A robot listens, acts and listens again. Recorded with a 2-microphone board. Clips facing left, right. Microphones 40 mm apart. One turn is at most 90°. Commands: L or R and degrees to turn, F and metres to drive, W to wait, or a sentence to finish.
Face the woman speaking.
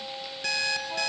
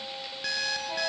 W
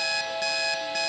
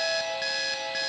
W
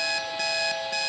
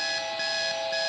I can't make out a woman speaking, only an alarm clock.